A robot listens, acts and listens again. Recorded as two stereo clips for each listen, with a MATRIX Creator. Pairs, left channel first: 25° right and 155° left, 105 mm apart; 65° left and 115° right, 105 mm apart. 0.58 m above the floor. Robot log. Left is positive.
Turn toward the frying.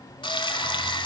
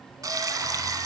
note: The frying: 60° right.
cmd yaw -60
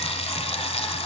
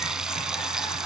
note: The frying is now 30° right.
cmd yaw -30
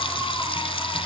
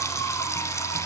end: Found it: frying, straight ahead.